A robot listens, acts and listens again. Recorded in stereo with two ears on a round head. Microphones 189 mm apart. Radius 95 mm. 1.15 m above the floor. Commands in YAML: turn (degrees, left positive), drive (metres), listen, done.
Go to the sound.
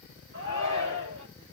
turn: -55
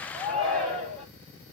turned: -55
drive: 1.0
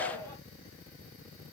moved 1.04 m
turn: 15
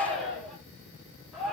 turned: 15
drive: 1.0
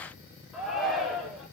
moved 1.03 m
drive: 1.0
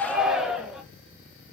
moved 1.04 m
drive: 1.0
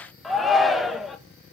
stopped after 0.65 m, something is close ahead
done: "I am next to the shout."